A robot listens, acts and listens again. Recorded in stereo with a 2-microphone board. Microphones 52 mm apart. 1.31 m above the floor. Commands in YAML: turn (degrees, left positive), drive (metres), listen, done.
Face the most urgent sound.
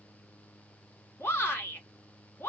turn: 55
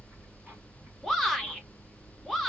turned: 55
done: "Facing the shout, 1 to 2 m away."